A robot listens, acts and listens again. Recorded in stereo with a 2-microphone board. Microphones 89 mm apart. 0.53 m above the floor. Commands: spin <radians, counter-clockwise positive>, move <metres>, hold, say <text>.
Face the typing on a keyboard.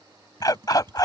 spin -0.96
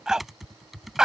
say Facing the typing on a keyboard.